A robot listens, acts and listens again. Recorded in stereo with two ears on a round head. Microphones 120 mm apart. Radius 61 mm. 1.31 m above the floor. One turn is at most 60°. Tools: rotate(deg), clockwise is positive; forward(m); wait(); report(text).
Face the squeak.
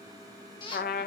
rotate(-40)
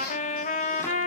wait()
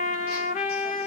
wait()
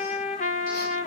report("I heard a squeak, but can't make it out now. It was about straight ahead or 100° left.")